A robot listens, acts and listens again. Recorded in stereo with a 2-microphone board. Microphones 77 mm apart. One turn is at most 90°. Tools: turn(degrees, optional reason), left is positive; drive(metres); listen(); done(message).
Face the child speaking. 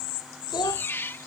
turn(degrees=90)
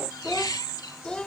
turn(degrees=10, reason="So it is at 10° left.")
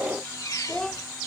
turn(degrees=10, reason="The child speaking is now 10° left.")
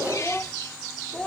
turn(degrees=15, reason="The child speaking is now 15° left.")
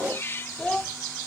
turn(degrees=10, reason="The child speaking is now 10° left.")
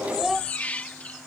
done("Found it: a child speaking, straight ahead.")